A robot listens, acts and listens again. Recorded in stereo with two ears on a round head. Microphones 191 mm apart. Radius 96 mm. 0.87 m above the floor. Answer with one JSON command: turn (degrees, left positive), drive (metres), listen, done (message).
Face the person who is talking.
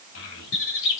{"turn": 70}
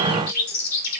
{"listen": true}
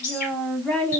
{"done": "Facing the child speaking."}